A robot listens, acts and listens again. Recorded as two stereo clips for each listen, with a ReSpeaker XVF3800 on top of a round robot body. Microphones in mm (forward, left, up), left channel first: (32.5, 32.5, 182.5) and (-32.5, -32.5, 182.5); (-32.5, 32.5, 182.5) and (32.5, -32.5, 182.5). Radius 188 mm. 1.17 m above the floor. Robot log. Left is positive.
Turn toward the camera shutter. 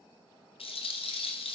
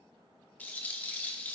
cmd idle
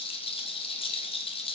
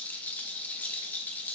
cmd idle
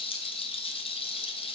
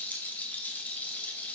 end: I can't make out a camera shutter, only a rattle.